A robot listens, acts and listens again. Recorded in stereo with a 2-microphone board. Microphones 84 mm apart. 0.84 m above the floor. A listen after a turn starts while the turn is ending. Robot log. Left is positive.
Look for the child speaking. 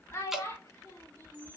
note: The child speaking: about 40° left or 140° left.
cmd yaw +40
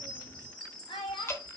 note: So it is at 100° left.
cmd yaw +100
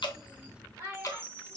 note: The child speaking is now 30° right.
cmd yaw -30
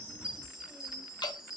cmd idle
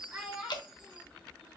note: The child speaking is now 10° right.
cmd yaw -10
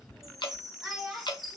end: Found it: a child speaking, straight ahead.